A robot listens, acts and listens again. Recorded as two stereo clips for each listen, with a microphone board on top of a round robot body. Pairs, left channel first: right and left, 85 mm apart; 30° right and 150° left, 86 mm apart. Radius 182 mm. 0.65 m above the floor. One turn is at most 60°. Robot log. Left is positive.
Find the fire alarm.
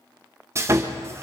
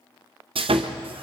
cmd idle
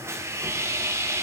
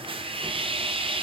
cmd idle
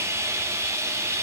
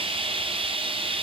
end: I can't make out a fire alarm, only sawing.